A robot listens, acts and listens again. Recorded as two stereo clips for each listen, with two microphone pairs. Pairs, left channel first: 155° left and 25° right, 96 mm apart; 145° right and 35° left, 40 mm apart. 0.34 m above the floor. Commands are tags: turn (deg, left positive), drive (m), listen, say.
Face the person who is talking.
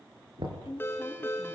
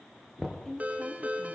<turn deg="140"/>
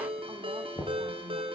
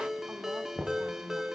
<listen/>
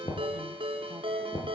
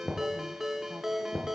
<listen/>
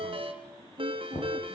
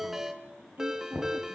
<say>Facing where the woman speaking came from. I can't hear it now.</say>